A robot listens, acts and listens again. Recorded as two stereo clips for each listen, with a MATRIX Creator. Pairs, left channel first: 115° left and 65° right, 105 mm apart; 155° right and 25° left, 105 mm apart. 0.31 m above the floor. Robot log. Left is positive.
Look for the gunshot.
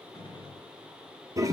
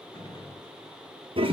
note: The gunshot: 155° left.
cmd yaw +155
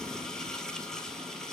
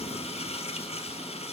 end: I heard a gunshot from this way, but can't make it out now.